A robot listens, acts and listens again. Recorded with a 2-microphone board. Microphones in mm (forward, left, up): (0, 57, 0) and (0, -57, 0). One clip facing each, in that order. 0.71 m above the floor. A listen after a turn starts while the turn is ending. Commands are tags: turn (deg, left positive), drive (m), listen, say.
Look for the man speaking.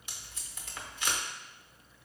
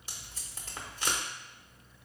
<listen/>
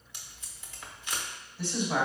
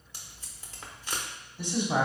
<turn deg="-15"/>
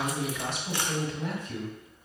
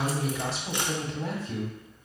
<turn deg="-145"/>
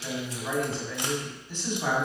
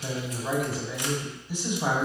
<turn deg="-15"/>
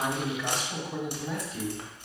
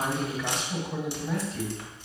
<say>Facing the man speaking.</say>